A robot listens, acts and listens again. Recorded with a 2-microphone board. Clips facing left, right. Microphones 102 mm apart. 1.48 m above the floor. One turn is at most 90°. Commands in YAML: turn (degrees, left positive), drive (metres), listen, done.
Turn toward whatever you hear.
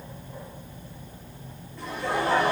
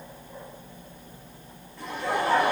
turn: 30
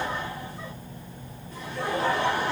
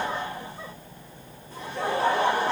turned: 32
turn: -30
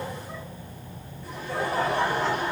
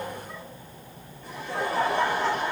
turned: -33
done: "Found it: laughter, straight ahead, 1 to 2 m away."